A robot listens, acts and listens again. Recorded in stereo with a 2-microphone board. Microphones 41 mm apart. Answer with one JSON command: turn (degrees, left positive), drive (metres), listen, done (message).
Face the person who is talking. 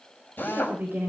{"turn": -50}
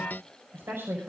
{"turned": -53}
{"turn": -75}
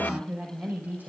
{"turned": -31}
{"turn": -45}
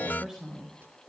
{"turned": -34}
{"turn": -10}
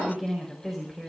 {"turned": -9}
{"done": "Found it: a woman speaking, straight ahead, over 4 m away."}